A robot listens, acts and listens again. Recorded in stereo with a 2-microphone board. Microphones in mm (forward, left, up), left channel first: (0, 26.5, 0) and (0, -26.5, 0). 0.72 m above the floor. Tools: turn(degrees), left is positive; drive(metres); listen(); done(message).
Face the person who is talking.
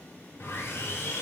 listen()
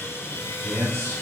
turn(degrees=-55)
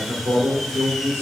turn(degrees=-70)
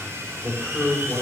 turn(degrees=-25)
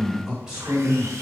turn(degrees=-15)
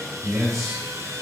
done("Found it: a man speaking, straight ahead.")